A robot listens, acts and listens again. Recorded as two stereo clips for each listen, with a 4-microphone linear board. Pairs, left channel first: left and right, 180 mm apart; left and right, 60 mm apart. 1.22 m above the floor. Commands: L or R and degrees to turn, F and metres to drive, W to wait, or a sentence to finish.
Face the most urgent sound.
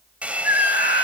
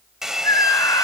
L90
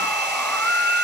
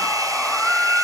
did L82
L10
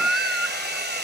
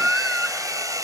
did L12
Facing the scream, 2 to 4 m away.